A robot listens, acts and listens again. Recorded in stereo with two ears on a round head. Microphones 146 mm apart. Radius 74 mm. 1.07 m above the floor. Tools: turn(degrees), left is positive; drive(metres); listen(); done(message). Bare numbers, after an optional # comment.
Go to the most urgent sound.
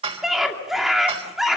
turn(30)
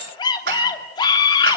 # So it is at 150° left.
turn(150)
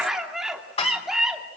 drive(1.0)
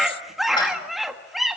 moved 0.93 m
drive(1.0)
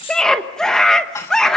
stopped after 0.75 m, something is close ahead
done("I am next to the scream.")